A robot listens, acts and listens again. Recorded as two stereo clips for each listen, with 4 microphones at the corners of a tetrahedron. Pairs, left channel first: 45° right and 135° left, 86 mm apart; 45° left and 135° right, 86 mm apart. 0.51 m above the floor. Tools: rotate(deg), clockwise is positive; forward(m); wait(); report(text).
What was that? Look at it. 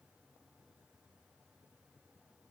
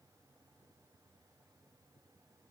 wait()
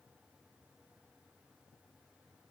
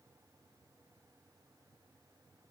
wait()
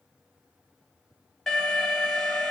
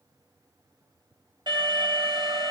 rotate(130)
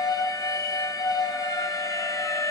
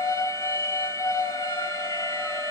report("Facing the alarm.")